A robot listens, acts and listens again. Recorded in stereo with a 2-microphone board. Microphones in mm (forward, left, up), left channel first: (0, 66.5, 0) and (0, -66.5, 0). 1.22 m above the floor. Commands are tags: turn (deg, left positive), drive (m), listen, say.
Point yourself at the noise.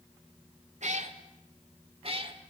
<turn deg="-40"/>
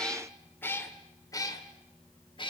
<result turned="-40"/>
<turn deg="40"/>
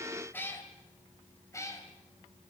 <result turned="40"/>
<turn deg="25"/>
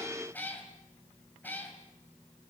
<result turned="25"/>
<turn deg="15"/>
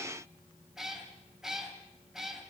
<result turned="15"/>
<say>Found it: a cat meowing, straight ahead.</say>